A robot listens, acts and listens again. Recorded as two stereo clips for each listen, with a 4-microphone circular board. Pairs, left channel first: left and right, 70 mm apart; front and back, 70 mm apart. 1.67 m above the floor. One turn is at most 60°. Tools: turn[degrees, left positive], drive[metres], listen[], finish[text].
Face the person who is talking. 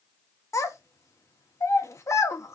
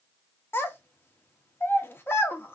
Thought: The child speaking: 55° left.
Action: turn[55]
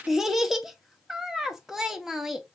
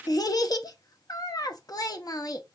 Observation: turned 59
Action: finish[Found it: a child speaking, straight ahead.]